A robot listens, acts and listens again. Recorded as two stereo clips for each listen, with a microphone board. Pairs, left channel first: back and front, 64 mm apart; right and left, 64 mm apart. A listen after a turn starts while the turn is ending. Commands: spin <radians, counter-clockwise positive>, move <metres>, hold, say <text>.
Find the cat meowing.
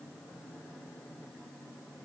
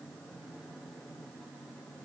hold
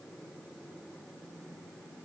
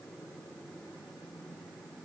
hold
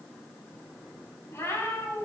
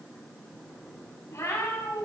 spin -2.27
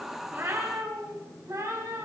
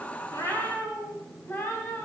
spin -0.52
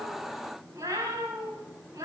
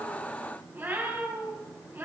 spin 0.52
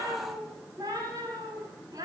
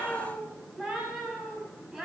say Found it: a cat meowing, straight ahead, over 4 m away.